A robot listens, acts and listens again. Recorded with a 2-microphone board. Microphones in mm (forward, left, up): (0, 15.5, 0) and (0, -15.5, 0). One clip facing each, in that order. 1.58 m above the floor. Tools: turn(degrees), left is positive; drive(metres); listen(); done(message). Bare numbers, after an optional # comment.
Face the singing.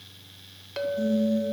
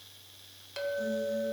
turn(30)
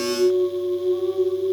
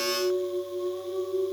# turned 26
# So it is at 150° left.
turn(150)
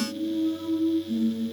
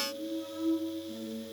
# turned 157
# The singing is now 10° right.
turn(-10)
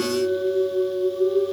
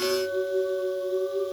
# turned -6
done("Found it: singing, straight ahead, over 4 m away.")